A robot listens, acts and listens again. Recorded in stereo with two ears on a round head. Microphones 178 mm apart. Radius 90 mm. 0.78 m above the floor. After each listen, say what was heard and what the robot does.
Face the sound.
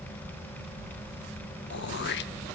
The throat clearing: about 60° left or 120° left. Turn 60° left.
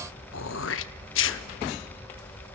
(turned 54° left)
So it is at 65° left. Turn 65° left.
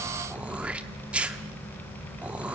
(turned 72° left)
Found it: throat clearing, straight ahead.